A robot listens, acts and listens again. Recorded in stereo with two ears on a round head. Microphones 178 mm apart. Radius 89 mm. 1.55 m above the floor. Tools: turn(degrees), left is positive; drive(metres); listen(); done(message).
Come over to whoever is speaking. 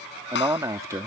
turn(degrees=-15)
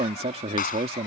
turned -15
turn(degrees=-150)
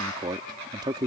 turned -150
turn(degrees=-25)
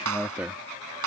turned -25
drive(metres=1.0)
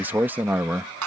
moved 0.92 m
turn(degrees=-10)
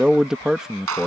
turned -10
drive(metres=1.0)
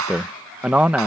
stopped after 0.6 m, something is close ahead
done("I am next to the man speaking.")